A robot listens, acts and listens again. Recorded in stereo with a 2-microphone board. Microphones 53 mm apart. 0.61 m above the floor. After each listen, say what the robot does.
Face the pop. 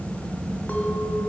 Keep listening.
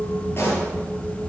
Turn 45° left.
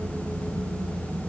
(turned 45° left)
Keep listening.
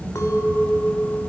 I heard a pop, but can't make it out now. It was about straight ahead or 90° left.